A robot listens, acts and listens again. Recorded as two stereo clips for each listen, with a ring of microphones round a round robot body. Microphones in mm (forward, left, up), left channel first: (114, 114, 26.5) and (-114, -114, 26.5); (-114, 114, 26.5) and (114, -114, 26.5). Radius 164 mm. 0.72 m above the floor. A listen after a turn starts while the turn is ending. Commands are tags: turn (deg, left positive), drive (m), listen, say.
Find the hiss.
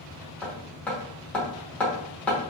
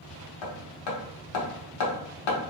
<listen/>
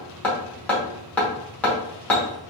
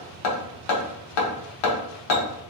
<listen/>
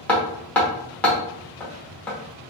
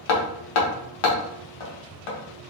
<say>I can't make out a hiss to turn to.</say>